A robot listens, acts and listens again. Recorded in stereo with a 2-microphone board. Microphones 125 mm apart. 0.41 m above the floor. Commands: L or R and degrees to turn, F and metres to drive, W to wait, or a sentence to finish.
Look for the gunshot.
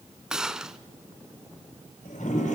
R30
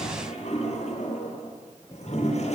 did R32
W
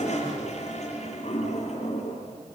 I heard a gunshot, but can't make it out now. It was about 30° left or 145° right.